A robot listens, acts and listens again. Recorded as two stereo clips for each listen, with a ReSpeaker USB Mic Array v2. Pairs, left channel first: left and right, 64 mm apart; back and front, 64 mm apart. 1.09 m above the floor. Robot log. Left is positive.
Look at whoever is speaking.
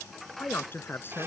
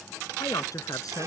note: The man speaking: 150° left.
cmd yaw +150
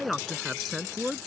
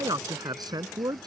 end: Found it: a man speaking, straight ahead.